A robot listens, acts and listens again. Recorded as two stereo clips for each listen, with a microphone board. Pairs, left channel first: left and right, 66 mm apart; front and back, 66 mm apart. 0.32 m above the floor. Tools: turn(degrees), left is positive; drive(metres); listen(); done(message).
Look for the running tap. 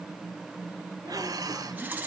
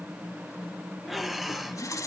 turn(degrees=-25)
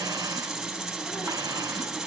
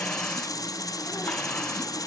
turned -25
done("Facing the running tap, 1 to 2 m away.")